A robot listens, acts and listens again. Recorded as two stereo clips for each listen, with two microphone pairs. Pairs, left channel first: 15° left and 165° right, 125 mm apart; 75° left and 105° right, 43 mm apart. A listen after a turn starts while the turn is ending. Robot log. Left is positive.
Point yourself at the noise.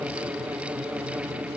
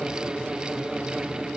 cmd idle
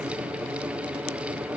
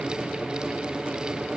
cmd idle
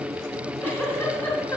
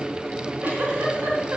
note: The giggle: 60° right.
cmd yaw -60
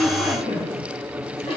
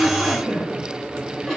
note: The giggle is now 20° right.
cmd yaw -20
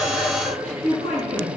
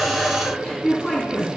end: Facing the giggle, 2 to 4 m away.